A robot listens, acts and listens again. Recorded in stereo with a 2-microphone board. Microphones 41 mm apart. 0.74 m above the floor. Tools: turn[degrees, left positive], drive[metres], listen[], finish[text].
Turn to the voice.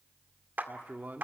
Thought: The man speaking: about 50° right or 130° right.
Action: turn[-50]
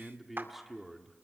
Action: finish[Facing the man speaking, 1 to 2 m away.]